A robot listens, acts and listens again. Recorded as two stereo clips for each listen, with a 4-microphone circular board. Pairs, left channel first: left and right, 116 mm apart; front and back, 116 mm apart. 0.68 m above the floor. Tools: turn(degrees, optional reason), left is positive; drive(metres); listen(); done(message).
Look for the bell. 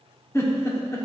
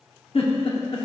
listen()
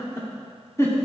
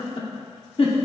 listen()
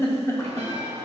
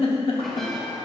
turn(degrees=-90, reason="The bell: 90° right.")
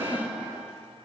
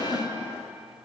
listen()
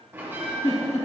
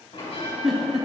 turn(degrees=-25, reason="The bell is now 25° right.")
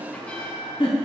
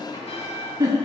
turn(degrees=10, reason="The bell is now 10° left.")
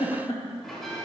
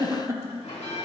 done("Found it: a bell, straight ahead.")